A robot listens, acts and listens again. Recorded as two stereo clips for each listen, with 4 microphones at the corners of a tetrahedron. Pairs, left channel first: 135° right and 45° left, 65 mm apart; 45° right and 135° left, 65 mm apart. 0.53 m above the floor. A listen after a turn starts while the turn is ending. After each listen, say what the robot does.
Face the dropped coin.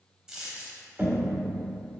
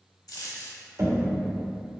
Turn 35° right.
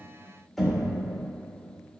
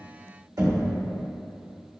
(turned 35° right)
Facing where the dropped coin came from. I can't hear it now.